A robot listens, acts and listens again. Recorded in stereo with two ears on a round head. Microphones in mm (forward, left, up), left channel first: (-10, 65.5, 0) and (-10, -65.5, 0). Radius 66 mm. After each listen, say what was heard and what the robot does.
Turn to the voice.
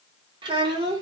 The child speaking: about 35° right or 145° right. Turn 35° right.
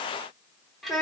Facing the child speaking.